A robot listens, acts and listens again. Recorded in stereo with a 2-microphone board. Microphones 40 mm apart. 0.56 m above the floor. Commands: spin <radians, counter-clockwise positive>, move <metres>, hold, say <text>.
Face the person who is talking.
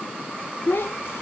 spin 1.57
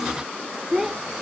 spin -0.26
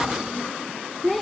say Found it: a child speaking, straight ahead.